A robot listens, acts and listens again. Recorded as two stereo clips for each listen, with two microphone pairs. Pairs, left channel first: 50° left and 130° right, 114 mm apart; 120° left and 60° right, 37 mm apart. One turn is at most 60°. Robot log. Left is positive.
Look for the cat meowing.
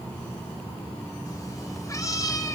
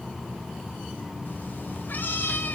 note: The cat meowing: 110° left.
cmd yaw +60
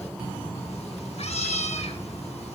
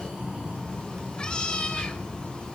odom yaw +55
note: The cat meowing is now 55° left.
cmd yaw +55
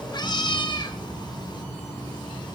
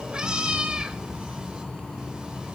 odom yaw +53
end: Found it: a cat meowing, straight ahead.